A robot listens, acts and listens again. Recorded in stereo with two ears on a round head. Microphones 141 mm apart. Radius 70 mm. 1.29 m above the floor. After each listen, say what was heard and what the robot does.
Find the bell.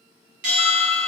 The bell: about 55° right or 125° right. Turn 55° right.
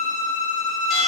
Facing the bell.